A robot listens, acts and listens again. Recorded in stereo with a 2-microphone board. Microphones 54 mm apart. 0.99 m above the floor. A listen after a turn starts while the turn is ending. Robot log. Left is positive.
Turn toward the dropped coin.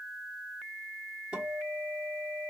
cmd idle
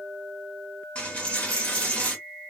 note: The dropped coin: about 25° left or 155° left.
cmd yaw +25
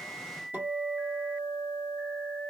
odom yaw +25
cmd idle
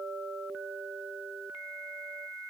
end: I heard a dropped coin, but can't make it out now. It was about straight ahead or 130° left.